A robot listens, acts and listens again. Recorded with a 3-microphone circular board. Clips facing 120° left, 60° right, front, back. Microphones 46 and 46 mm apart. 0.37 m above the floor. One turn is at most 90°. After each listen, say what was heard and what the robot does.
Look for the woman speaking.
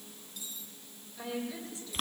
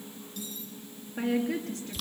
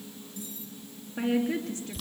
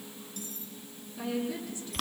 The woman speaking: 20° right. Turn 20° right.
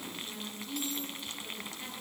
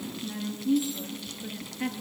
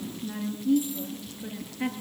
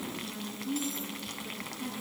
Found it: a woman speaking, straight ahead, over 4 m away.